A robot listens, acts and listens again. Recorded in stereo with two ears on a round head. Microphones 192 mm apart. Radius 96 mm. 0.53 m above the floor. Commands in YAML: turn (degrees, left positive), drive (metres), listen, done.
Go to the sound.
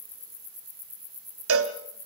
turn: -70
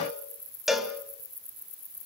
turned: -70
drive: 1.0
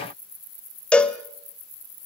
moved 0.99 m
drive: 1.0
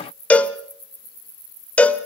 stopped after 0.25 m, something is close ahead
done: "Arrived at the cowbell, straight ahead."